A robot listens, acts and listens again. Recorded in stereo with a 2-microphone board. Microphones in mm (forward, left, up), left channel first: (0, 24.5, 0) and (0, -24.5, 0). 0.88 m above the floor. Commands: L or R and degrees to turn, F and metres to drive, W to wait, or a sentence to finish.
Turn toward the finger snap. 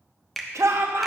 L30
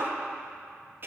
W
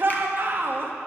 W
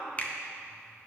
L150
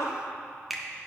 Found it: a finger snap, straight ahead, under 1 m away.